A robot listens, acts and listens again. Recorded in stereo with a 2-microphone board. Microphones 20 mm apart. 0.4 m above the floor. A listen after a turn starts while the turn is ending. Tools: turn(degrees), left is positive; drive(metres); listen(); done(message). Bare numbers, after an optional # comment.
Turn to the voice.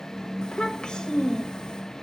# The child speaking: about 55° left or 125° left.
turn(55)
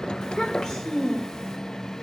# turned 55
# So it is at 55° left.
turn(55)
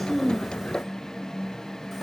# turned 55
listen()
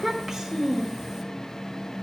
done("Facing the child speaking, under 1 m away.")